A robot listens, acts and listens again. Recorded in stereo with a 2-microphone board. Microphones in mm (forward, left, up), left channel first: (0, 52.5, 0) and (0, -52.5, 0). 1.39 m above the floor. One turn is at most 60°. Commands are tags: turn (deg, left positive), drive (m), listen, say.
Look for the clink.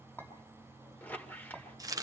<turn deg="15"/>
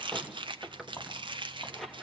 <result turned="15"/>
<turn deg="60"/>
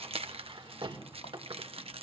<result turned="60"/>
<turn deg="60"/>
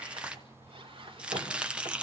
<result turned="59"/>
<turn deg="30"/>
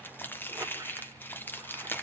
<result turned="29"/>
<say>I heard a clink from this way, but can't make it out now.</say>